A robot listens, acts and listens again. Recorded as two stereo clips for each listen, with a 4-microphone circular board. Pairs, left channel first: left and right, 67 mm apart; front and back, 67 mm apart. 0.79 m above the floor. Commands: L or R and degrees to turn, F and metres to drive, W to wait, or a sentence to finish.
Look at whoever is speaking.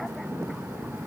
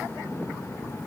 W
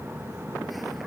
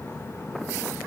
W
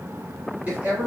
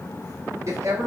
R155
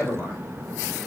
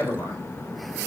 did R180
L25
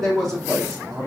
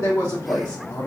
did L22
Found it: a man speaking, straight ahead, 1 to 2 m away.